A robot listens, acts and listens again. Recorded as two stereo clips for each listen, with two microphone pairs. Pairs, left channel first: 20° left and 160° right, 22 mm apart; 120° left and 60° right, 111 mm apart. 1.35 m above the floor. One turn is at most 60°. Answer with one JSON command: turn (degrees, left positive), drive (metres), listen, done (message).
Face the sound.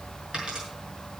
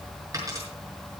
{"turn": -60}
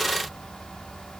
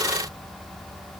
{"turn": -55}
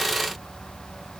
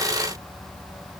{"done": "Facing where the dropped coin came from. I can't hear it now."}